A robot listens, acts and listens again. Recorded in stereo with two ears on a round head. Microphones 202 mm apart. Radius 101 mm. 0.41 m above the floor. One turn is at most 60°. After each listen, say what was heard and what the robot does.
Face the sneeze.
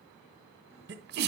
The sneeze: about 45° right or 135° right. Turn 45° right.
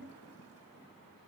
Keep listening.
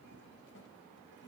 I heard a sneeze, but can't make it out now. It was about straight ahead or 90° right.